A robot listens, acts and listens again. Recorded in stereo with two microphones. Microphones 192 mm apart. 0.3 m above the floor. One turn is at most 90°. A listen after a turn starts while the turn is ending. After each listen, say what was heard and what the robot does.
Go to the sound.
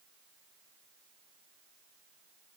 Keep listening.
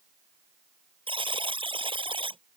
The buzzer: about 25° right or 155° right. Turn 25° right.
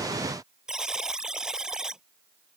Drive 1.0 m forward.
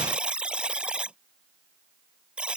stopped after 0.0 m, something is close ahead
Something is in my way. I am facing the buzzer but have not reached it.